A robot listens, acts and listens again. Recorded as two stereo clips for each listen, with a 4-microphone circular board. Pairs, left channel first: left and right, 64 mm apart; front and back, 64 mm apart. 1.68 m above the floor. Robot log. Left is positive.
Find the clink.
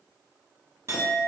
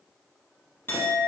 note: The clink: 55° right.
cmd yaw -55
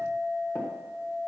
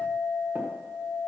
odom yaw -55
note: The clink is now 15° right.
cmd yaw -15
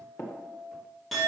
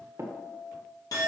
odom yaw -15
end: Facing the clink.